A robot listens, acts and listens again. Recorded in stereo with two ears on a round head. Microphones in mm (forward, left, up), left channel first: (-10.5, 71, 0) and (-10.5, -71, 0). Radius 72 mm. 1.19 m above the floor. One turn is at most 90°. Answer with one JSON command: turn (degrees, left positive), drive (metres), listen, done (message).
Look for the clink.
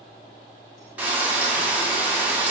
{"listen": true}
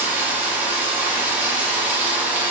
{"listen": true}
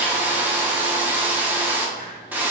{"done": "I can't make out a clink to turn to."}